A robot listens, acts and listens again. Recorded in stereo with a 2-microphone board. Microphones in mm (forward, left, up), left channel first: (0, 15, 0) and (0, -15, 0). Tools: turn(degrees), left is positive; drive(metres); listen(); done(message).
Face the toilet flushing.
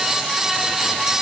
listen()
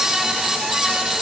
listen()
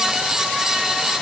done("I can't make out a toilet flushing to turn to.")